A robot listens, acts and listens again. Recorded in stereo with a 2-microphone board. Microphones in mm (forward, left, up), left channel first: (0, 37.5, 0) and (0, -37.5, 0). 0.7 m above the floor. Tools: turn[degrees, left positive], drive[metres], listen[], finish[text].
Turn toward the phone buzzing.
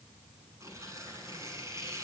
Action: listen[]
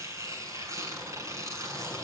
Action: listen[]
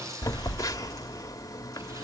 Thought: The phone buzzing: about 45° left or 135° left.
Action: turn[45]
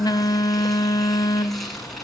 Thought: So it is at 80° left.
Action: turn[80]
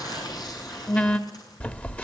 Thought: The phone buzzing is now 20° left.
Action: turn[20]
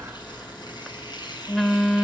Thought: The phone buzzing is now 10° left.
Action: turn[10]
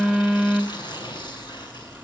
Action: finish[Found it: a phone buzzing, straight ahead, 1 to 2 m away.]